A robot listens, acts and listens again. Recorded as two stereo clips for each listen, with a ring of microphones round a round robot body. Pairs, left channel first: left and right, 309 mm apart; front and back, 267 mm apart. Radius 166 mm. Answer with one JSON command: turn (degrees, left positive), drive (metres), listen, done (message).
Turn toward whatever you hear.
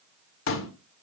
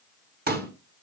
{"turn": 130}
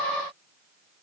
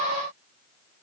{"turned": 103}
{"turn": 30}
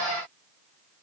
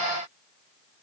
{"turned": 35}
{"done": "I heard a pop from this way, but can't make it out now."}